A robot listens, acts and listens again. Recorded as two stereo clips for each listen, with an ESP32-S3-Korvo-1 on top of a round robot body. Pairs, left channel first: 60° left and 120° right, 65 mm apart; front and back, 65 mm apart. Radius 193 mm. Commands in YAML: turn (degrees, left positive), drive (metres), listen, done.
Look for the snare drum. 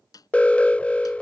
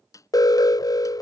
turn: 35
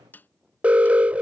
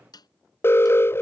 done: "Facing the snare drum."